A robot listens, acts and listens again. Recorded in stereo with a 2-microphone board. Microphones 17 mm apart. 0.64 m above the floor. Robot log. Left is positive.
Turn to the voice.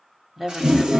note: The woman speaking: about 15° right or 165° right.
cmd yaw -15
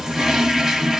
cmd idle
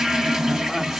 cmd idle
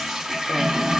end: I heard a woman speaking, but can't make it out now. It was about straight ahead or 150° right.